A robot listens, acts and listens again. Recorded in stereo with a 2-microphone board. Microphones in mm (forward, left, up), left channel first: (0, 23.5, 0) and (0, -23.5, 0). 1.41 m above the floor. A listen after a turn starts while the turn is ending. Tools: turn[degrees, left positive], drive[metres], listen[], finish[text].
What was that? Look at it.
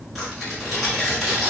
Action: turn[30]
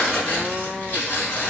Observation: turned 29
Thought: So it is at 145° left.
Action: turn[145]
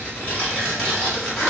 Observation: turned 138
Thought: The tearing paper is now 10° left.
Action: turn[10]
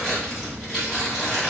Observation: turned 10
Action: finish[Facing the tearing paper, 1 to 2 m away.]